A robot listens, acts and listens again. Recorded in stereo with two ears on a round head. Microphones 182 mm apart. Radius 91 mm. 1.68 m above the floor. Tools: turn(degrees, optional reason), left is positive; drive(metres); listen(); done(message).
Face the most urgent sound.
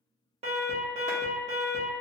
turn(degrees=-35, reason="The alarm: about 35° right or 145° right.")
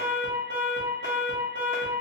turn(degrees=-105, reason="So it is at 105° right.")
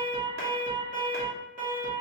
turn(degrees=-45, reason="The alarm is now 45° right.")
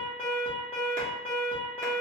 turn(degrees=10, reason="The alarm is now 10° left.")
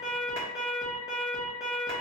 done("Found it: an alarm, straight ahead.")